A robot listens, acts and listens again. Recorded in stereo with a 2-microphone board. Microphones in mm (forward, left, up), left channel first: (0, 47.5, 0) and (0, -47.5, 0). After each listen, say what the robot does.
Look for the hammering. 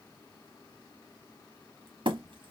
Turn 60° right.
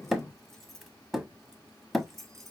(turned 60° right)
Found it: hammering, straight ahead, 1 to 2 m away.